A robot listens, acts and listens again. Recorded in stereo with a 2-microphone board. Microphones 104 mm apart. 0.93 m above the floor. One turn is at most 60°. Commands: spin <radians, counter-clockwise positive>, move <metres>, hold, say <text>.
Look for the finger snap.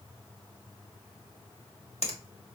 spin 1.05
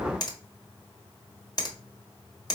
spin 0.70
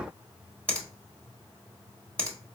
spin 0.17
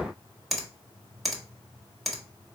say Found it: a finger snap, straight ahead.